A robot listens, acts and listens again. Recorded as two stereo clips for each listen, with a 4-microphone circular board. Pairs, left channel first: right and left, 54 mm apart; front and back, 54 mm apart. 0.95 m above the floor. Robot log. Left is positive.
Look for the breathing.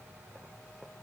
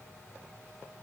cmd idle
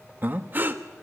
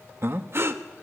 note: The breathing: 140° left.
cmd yaw +140
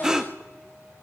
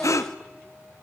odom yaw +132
note: The breathing is now 10° left.
cmd yaw +10
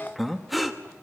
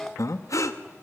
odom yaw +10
end: Found it: breathing, straight ahead, 1 to 2 m away.